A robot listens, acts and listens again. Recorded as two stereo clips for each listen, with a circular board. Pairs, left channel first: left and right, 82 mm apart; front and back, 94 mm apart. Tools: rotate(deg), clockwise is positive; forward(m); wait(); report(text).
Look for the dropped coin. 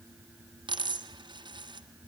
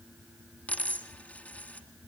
rotate(75)
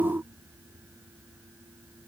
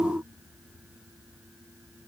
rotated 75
report("I heard a dropped coin from this way, but can't make it out now.")